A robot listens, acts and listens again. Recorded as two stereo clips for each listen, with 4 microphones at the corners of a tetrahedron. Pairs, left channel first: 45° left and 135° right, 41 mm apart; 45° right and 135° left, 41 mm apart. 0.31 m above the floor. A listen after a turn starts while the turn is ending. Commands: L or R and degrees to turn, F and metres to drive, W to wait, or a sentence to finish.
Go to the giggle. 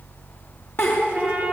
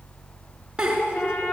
L65
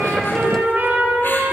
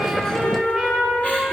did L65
W
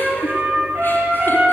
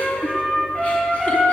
W
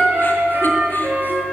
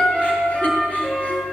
Facing where the giggle came from. I can't hear it now. I did not reach it.